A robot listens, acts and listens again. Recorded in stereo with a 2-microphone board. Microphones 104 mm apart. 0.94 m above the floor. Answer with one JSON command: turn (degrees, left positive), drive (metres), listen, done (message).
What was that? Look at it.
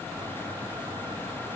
{"listen": true}
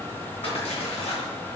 {"turn": 90}
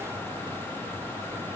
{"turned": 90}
{"done": "Facing where the splash came from. I can't hear it now."}